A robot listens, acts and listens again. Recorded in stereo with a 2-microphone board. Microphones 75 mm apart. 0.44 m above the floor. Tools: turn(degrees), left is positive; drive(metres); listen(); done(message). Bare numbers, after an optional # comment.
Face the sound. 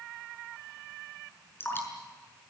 # The dripping: about 30° left or 150° left.
turn(30)
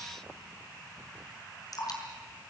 # So it is at 120° left.
turn(120)
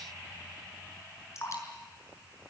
# The dripping is now 40° left.
turn(40)
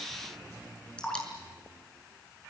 # The dripping is now 10° left.
turn(10)
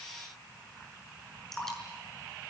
done("Facing the dripping.")